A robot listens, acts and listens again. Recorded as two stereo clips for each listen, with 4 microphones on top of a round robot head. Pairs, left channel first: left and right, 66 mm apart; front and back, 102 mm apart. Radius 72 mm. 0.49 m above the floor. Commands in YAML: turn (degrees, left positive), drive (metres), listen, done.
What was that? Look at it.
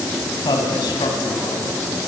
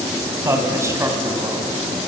turn: 120
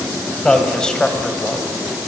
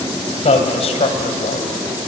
turn: 10
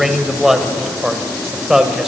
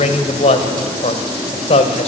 turn: -10
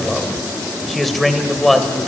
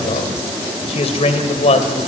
done: "Facing the man speaking."